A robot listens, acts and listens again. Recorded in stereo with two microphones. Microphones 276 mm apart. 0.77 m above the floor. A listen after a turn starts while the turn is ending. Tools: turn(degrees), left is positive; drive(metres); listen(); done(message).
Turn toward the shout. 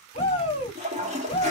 turn(degrees=20)
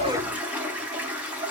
listen()
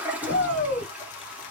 turn(degrees=135)
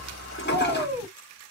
done("Facing the shout.")